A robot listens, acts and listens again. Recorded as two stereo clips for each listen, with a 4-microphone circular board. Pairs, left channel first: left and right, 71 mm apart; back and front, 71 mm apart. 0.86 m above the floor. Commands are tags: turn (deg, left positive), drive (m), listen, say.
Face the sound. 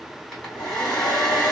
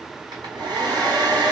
<turn deg="10"/>
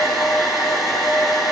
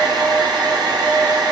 <say>Facing the hair dryer, 2 to 4 m away.</say>